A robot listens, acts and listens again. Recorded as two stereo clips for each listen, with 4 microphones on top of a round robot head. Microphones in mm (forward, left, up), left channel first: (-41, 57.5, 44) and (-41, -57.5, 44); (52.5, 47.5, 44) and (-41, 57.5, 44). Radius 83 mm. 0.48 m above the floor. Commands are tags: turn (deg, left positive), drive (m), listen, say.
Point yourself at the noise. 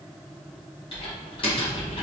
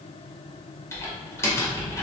<turn deg="50"/>
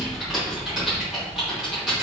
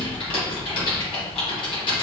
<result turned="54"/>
<say>Found it: typing on a keyboard, straight ahead.</say>